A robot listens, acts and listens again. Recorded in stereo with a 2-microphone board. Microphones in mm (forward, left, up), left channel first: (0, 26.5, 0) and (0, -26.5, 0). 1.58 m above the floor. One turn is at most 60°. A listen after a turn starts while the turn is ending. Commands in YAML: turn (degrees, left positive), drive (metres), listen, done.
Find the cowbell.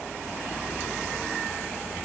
listen: true
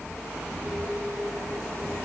listen: true
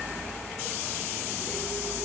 done: "I can't make out a cowbell."